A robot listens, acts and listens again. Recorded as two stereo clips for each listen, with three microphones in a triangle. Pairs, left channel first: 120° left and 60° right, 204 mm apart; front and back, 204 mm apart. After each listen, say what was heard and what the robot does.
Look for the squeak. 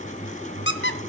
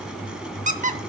The squeak: 135° left. Turn 135° left.
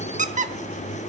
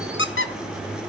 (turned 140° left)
The squeak is now 10° right. Turn 10° right.
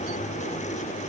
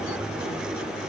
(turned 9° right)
Keep listening.
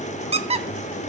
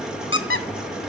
Found it: a squeak, straight ahead, under 1 m away.